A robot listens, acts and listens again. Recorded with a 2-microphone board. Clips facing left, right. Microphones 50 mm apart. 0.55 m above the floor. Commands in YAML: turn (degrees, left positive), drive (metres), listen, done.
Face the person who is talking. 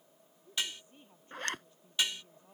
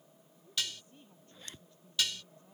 turn: 20
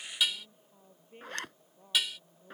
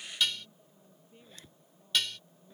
turn: 140
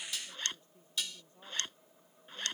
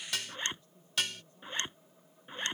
turn: 25
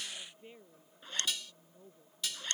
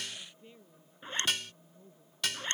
turn: 20
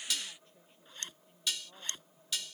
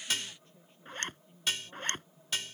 done: "Facing the woman speaking."